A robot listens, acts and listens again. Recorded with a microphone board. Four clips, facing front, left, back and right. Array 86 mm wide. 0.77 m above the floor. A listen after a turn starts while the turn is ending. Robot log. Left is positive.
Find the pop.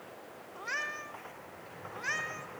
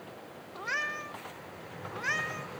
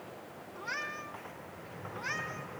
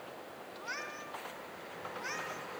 cmd idle
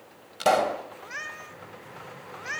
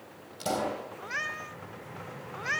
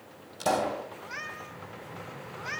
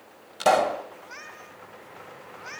note: The pop: 50° right.
cmd yaw -50
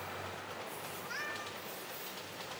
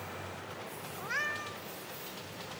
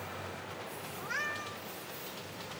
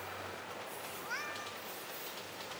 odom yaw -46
end: I heard a pop from this way, but can't make it out now.